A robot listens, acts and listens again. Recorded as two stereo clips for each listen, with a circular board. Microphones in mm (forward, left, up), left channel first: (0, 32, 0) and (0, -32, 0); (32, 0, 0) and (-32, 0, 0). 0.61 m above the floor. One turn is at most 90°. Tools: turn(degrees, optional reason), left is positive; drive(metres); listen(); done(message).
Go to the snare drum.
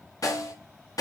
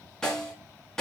turn(degrees=80, reason="The snare drum: 80° left.")
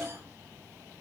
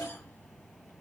listen()
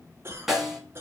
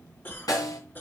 drive(metres=1.0)
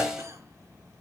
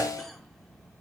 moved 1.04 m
turn(degrees=-10, reason="The snare drum is now 10° right.")
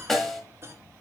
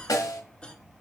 drive(metres=1.0)
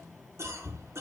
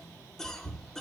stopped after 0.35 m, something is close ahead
listen()
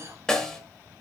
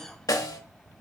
turn(degrees=10, reason="The snare drum is now 10° left.")
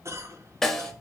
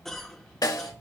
done("Arrived at the snare drum, straight ahead.")